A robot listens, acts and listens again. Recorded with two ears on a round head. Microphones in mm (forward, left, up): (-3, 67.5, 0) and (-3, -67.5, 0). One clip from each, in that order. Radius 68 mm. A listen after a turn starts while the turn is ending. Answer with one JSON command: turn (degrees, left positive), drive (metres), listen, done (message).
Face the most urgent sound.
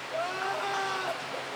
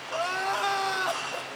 {"turn": -35}
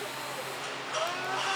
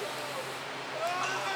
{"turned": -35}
{"done": "Facing the crying, 1 to 2 m away."}